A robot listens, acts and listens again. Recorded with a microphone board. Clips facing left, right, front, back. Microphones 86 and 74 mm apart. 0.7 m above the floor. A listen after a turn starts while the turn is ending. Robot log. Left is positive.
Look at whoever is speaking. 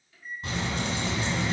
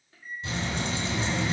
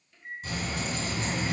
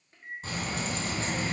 note: The child speaking: 175° left.
cmd yaw +175
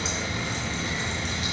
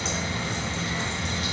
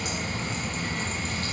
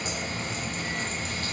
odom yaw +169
end: Facing the child speaking, 1 to 2 m away.